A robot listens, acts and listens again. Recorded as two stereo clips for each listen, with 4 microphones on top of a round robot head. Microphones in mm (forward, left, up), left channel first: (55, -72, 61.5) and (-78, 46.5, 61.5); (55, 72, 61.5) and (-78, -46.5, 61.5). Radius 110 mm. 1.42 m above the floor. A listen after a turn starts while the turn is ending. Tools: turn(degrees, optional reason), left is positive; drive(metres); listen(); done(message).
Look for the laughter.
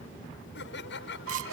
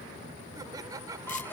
turn(degrees=-65, reason="The laughter: 65° right.")
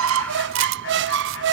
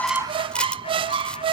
listen()
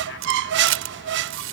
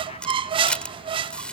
listen()
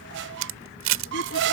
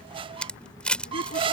done("Facing where the laughter came from. I can't hear it now.")